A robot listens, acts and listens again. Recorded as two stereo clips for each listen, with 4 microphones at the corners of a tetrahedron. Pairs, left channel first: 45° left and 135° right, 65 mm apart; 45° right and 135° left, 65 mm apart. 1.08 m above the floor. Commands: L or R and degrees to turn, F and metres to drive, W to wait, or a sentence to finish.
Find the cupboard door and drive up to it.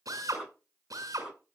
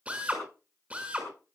W
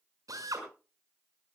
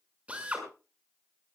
W
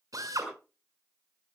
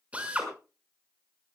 I can't make out a cupboard door, only a drill.